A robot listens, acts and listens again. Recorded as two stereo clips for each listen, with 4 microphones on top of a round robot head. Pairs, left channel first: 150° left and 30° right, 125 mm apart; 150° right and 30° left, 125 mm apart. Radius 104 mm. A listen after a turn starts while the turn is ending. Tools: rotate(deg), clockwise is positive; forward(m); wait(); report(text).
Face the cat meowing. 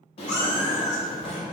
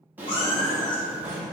rotate(-155)
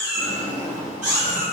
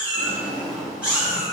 rotate(55)
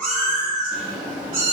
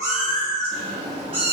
rotate(15)
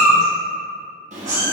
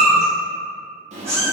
rotate(10)
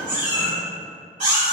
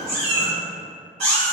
report("Found it: a cat meowing, straight ahead, 2 to 4 m away.")